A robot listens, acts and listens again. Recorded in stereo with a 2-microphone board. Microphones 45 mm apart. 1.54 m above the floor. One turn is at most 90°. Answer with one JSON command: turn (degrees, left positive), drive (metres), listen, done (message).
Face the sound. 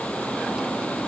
{"listen": true}
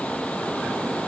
{"listen": true}
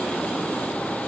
{"done": "I can't make out anything."}